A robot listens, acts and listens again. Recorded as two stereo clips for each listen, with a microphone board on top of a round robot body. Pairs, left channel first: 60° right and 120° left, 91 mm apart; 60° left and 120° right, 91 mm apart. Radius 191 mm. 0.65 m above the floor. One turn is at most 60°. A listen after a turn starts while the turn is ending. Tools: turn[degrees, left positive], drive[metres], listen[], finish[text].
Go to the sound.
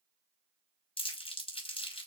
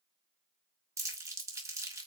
Thought: The crumpling: 65° right.
Action: turn[-60]
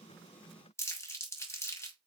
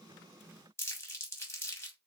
Action: drive[1.0]
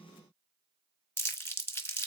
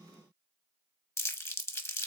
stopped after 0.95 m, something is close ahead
Action: finish[Arrived at the crumpling, straight ahead.]